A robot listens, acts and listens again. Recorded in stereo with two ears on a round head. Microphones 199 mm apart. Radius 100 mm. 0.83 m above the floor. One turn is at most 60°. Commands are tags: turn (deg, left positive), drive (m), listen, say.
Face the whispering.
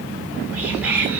<turn deg="-30"/>
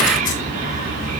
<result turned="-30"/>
<turn deg="-60"/>
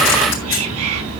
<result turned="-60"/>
<turn deg="-60"/>
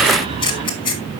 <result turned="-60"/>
<turn deg="-25"/>
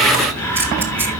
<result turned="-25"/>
<turn deg="10"/>
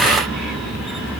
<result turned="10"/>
<say>Found it: whispering, straight ahead.</say>